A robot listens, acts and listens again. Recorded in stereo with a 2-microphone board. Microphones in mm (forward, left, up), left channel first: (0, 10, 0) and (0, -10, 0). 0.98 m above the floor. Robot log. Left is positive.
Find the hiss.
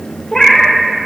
cmd idle
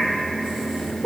cmd idle
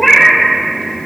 end: I can't make out a hiss to turn to.